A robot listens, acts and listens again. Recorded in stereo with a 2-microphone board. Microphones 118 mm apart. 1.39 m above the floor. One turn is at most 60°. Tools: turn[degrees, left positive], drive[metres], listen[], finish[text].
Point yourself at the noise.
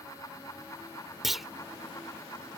Action: turn[30]
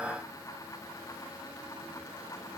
Action: listen[]
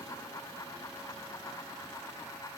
Action: finish[I heard a clunk, but can't make it out now. It was about 30° right or 150° left.]